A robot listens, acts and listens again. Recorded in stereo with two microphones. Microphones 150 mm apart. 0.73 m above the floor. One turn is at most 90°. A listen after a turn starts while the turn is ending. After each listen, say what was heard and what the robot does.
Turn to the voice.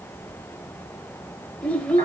Turn 30° left.
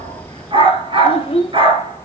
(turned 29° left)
So it is at 140° left. Turn 90° left.
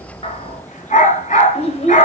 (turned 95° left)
The child speaking is now 45° left. Turn 45° left.
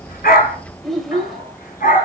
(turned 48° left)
Found it: a child speaking, straight ahead, 2 to 4 m away.